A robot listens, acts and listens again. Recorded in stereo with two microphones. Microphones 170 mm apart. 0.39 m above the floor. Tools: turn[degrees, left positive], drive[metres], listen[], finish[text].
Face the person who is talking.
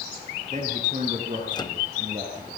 Thought: The man speaking: about 45° right or 135° right.
Action: turn[-45]
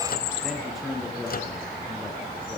Action: finish[Found it: a man speaking, straight ahead.]